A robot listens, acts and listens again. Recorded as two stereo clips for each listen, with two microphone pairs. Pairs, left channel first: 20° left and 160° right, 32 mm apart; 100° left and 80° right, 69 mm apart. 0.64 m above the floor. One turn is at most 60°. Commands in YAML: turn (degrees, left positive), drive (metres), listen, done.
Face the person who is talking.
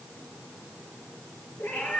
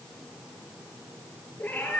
listen: true
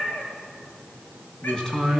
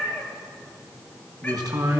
turn: -55
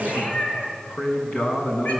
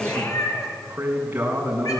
turn: -15
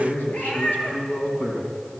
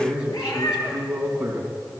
done: "Facing the man speaking."